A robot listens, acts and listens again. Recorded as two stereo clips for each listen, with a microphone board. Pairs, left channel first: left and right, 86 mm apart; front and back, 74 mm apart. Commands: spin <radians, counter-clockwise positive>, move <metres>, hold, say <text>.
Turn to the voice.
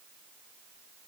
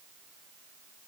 hold
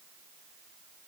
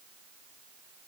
hold
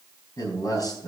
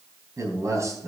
spin 2.36
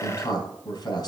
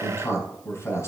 spin 0.87
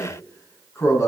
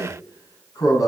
spin 0.61
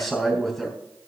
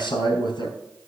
say Facing the man speaking, 2 to 4 m away.